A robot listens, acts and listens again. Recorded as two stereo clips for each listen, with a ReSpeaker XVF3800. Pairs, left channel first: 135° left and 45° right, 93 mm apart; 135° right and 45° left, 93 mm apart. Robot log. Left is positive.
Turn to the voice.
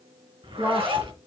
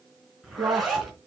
note: The woman speaking: 25° left.
cmd yaw +25
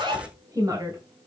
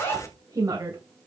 end: Found it: a woman speaking, straight ahead, 2 to 4 m away.